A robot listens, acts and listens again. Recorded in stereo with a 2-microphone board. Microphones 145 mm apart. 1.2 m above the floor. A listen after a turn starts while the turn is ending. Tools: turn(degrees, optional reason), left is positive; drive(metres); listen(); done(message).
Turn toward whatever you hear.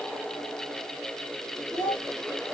turn(degrees=30)
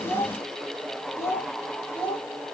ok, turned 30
turn(degrees=30)
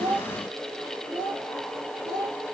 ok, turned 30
turn(degrees=30)
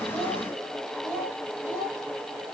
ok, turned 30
turn(degrees=145, reason="So it is at 145° left.")
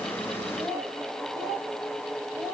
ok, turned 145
turn(degrees=-30, reason="The child speaking is now 30° right.")
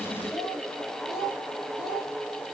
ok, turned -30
done("Facing the child speaking.")